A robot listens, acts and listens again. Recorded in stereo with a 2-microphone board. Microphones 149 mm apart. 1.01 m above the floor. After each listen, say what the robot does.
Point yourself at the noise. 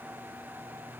Keep listening.
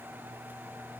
Keep listening.
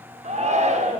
Turn 50° right.
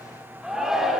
Found it: a shout, straight ahead, 1 to 2 m away.